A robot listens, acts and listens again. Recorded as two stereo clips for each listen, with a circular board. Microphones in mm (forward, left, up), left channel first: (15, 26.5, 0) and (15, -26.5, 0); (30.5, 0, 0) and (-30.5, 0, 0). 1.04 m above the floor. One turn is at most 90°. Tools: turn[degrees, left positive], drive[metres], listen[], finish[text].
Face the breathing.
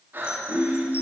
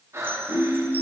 Thought: The breathing: 140° right.
Action: turn[-90]
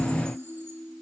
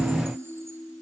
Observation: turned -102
Thought: Nothing new. It was at 35° right.
Action: turn[-35]
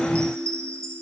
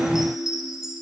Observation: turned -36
Action: listen[]
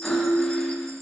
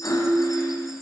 Action: finish[Facing where the breathing came from. I can't hear it now.]